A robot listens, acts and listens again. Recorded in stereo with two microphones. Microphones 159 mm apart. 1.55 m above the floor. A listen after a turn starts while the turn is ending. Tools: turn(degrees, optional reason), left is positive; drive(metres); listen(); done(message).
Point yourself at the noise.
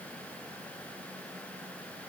listen()
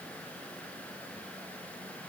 listen()
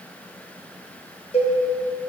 turn(degrees=35, reason="The cowbell: about 35° left or 145° left.")
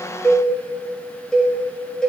done("Found it: a cowbell, straight ahead, under 1 m away.")